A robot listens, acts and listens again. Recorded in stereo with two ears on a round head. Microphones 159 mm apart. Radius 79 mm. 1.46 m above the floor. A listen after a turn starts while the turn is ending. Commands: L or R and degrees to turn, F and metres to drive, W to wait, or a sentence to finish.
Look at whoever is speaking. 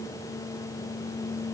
W
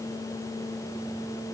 W
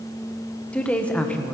L30
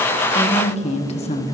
L140
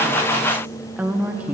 R10
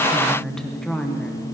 Found it: a woman speaking, straight ahead, 1 to 2 m away.